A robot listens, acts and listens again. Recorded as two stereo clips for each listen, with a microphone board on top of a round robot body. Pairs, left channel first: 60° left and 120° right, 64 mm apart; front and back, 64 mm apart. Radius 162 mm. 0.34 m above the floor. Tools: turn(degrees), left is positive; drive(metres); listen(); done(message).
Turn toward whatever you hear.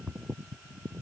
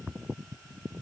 listen()
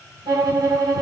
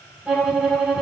turn(degrees=-100)
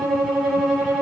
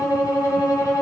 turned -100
turn(degrees=-30)
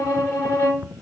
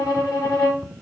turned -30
turn(degrees=20)
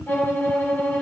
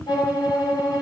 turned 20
done("Facing the violin, 1 to 2 m away.")